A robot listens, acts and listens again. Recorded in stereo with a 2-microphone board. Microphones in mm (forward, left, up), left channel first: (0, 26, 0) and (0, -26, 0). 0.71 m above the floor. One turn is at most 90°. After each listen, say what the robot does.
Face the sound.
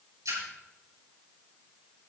Turn 90° right.
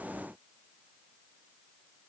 Facing where the splash came from. I can't hear it now.